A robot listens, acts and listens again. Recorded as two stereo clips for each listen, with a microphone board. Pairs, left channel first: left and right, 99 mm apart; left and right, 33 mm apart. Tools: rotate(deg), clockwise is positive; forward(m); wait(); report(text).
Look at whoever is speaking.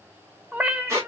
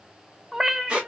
wait()
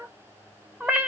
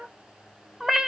wait()
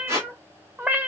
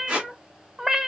report("I can't make out anyone speaking to turn to.")